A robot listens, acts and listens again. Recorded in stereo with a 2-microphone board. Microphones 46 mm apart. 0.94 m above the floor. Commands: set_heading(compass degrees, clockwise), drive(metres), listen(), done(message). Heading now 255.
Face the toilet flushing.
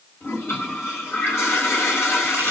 set_heading(185)
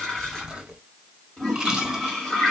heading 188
done("Found it: a toilet flushing, straight ahead.")